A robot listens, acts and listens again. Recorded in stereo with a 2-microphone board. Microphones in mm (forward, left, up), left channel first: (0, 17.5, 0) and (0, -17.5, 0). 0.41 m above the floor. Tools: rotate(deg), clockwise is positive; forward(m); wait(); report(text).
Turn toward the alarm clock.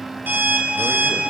rotate(65)
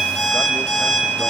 report("Facing the alarm clock.")